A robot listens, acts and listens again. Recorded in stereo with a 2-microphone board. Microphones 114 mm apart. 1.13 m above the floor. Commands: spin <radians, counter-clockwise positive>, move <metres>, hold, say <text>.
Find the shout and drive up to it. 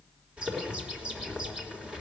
hold
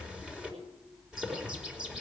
hold
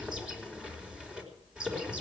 say I can't make out a shout to turn to.